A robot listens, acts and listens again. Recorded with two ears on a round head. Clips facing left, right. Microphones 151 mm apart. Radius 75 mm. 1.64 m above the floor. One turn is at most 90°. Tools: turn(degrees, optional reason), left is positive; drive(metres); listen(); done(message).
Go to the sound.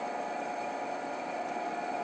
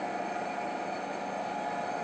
listen()
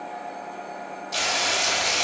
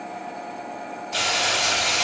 turn(degrees=60, reason="The frying: about 60° left or 120° left.")
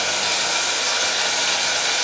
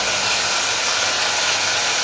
turn(degrees=35, reason="So it is at 35° left.")
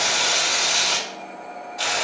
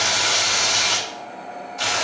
drive(metres=1.0)
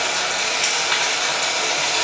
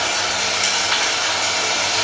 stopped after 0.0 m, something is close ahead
done("Blocked. The frying is further on, straight ahead.")